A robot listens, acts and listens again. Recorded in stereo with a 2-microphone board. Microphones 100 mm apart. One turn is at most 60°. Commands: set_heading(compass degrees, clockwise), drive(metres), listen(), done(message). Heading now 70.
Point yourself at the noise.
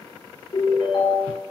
set_heading(10)
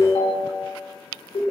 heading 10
set_heading(310)
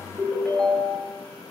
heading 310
set_heading(300)
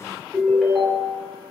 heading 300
done("Found it: a ringtone, straight ahead, 1 to 2 m away.")